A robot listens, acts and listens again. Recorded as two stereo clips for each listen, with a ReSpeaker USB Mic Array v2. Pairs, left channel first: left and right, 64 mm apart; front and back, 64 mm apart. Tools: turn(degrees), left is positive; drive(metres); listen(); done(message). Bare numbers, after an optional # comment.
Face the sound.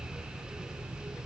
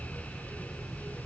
listen()
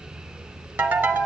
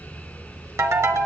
# The ringtone: 150° right.
turn(-150)
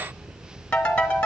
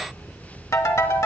# The ringtone is now 20° left.
turn(20)
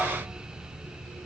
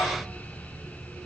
listen()
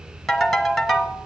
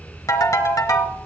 done("Facing the ringtone, 1 to 2 m away.")